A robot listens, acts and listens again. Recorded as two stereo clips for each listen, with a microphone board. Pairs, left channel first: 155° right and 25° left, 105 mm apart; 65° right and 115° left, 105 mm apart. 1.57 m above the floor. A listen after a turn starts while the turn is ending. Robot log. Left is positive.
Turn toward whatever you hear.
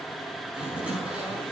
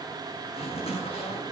note: The zipper: 55° right.
cmd yaw -55
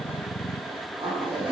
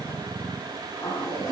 note: The zipper is now 15° right.
cmd yaw -15
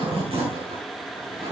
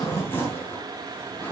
end: Facing the zipper, over 4 m away.